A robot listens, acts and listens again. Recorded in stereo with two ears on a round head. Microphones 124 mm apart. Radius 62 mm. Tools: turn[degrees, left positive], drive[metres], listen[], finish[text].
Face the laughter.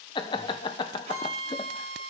Thought: The laughter: about 35° left or 145° left.
Action: turn[35]
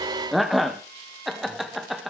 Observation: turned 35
Action: finish[Facing the laughter, under 1 m away.]